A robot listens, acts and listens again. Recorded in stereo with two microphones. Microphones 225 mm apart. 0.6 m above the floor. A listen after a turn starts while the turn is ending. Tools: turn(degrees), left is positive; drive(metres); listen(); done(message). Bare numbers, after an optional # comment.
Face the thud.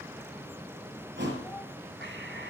# The thud: about 55° right or 125° right.
turn(-55)
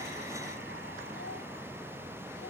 listen()
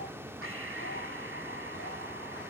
done("I heard a thud, but can't make it out now. It was about straight ahead or 70° right.")